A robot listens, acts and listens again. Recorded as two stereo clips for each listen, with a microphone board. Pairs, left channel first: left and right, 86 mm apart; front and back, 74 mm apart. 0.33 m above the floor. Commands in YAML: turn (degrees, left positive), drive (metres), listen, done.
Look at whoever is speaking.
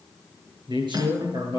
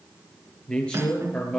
turn: -75
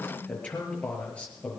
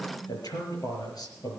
turn: 15
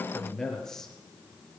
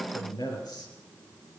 done: "Found it: a man speaking, straight ahead."